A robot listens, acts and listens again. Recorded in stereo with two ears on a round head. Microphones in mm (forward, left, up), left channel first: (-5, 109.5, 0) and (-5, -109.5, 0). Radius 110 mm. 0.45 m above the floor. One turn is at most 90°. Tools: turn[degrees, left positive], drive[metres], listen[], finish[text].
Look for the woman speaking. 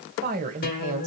Thought: The woman speaking: about 30° right or 150° right.
Action: turn[-30]
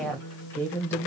Thought: So it is at 10° left.
Action: turn[10]
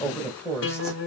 Thought: The woman speaking is now 10° left.
Action: turn[10]
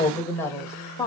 Thought: The woman speaking is now 15° left.
Action: turn[15]
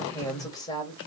Thought: The woman speaking is now 20° left.
Action: turn[20]
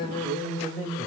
Action: finish[Found it: a woman speaking, straight ahead, 2 to 4 m away.]